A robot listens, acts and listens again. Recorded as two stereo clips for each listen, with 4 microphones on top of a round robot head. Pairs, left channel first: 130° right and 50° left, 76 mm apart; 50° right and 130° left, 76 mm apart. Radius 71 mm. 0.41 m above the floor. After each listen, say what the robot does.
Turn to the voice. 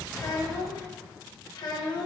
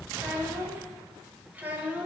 Turn 155° right.
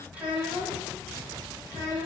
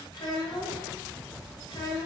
Turn 10° right.
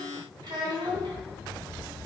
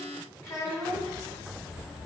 Turn 10° left.
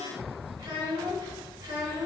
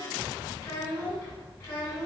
Facing the child speaking, 2 to 4 m away.